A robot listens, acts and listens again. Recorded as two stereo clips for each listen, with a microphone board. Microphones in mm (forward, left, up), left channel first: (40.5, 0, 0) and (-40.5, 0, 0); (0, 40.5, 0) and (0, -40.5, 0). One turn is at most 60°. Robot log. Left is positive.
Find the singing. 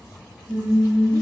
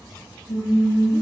note: The singing: 115° left.
cmd yaw +60
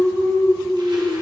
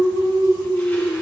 note: The singing is now 90° left.
cmd yaw +60
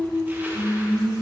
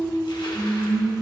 note: The singing is now 70° left.
cmd yaw +60
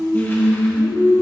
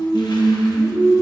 note: The singing is now 40° left.
cmd yaw +40
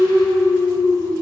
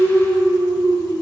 end: Found it: singing, straight ahead, 2 to 4 m away.